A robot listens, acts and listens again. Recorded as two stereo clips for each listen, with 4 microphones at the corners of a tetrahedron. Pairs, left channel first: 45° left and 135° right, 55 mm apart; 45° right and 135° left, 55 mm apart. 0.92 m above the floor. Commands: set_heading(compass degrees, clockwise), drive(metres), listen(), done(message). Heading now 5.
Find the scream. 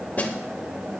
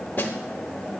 listen()
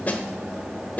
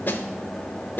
listen()
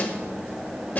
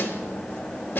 done("I can't make out a scream, only a snare drum.")